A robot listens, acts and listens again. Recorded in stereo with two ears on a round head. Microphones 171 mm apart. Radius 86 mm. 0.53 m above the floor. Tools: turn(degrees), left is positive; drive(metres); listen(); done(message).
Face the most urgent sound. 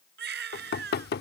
turn(degrees=-60)
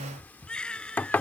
done("Found it: a baby crying, straight ahead.")